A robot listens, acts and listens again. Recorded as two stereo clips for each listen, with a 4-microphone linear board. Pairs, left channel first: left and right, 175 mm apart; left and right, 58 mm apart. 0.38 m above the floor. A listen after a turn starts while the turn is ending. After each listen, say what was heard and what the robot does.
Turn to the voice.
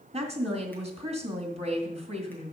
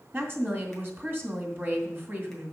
The woman speaking: about 40° right or 140° right. Turn 40° right.
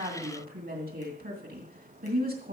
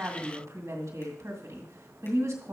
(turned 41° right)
So it is at 95° right. Turn 95° right.
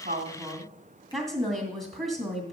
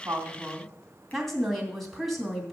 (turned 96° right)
Found it: a woman speaking, straight ahead, 2 to 4 m away.